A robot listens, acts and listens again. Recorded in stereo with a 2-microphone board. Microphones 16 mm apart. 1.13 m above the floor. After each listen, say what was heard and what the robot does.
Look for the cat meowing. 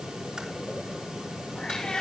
Turn 90° left.
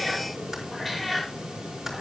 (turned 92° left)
Found it: a cat meowing, straight ahead.